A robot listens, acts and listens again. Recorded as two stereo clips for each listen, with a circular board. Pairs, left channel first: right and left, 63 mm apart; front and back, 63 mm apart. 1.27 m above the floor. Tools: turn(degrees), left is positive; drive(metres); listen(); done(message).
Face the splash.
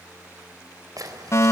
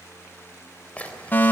turn(degrees=70)
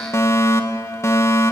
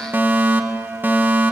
done("Facing where the splash came from. I can't hear it now.")